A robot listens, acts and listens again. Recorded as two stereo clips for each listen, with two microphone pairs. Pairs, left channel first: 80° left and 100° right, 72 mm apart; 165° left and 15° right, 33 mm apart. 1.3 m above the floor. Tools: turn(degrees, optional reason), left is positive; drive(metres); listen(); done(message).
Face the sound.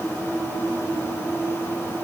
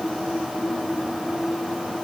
listen()
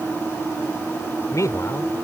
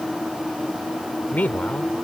turn(degrees=125, reason="The man speaking: 125° left.")
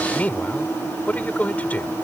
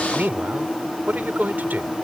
turn(degrees=15, reason="The man speaking is now 15° left.")
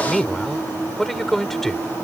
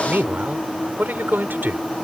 done("Facing the man speaking.")